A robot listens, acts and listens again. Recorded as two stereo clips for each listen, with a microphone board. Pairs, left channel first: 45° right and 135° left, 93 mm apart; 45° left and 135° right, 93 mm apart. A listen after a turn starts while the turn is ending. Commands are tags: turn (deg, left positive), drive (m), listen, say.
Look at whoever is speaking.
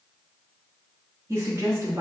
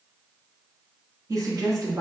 <turn deg="-175"/>
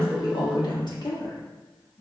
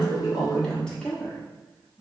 <turn deg="-35"/>
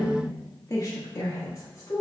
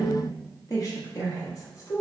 <say>Facing the woman speaking, 1 to 2 m away.</say>